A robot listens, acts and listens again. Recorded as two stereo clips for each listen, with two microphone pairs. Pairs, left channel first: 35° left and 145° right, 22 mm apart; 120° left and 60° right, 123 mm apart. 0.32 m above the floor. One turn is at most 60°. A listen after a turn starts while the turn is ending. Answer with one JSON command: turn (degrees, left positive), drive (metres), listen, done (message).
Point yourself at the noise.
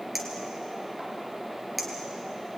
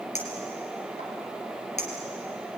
{"turn": 60}
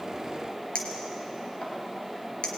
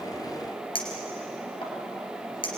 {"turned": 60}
{"turn": 60}
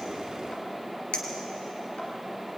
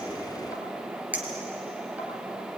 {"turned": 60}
{"turn": 15}
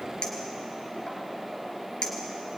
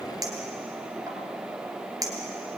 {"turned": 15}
{"done": "Facing the clink, 2 to 4 m away."}